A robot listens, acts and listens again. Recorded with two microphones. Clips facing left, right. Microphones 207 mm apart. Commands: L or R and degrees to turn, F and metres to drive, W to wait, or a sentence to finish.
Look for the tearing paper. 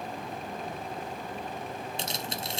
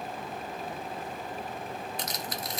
L25
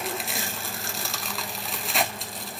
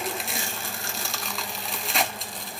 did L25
Facing the tearing paper.